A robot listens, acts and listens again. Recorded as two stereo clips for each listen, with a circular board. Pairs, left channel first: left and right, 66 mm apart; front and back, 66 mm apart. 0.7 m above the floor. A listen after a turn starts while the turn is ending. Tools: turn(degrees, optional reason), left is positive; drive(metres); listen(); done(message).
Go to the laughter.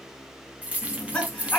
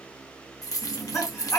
turn(degrees=20, reason="The laughter: 20° left.")
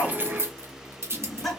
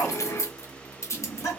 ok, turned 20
drive(metres=1.0)
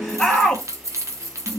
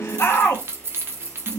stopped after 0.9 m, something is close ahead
turn(degrees=10, reason="The laughter is now 10° left.")
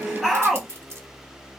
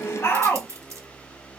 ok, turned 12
done("Arrived at the laughter, straight ahead.")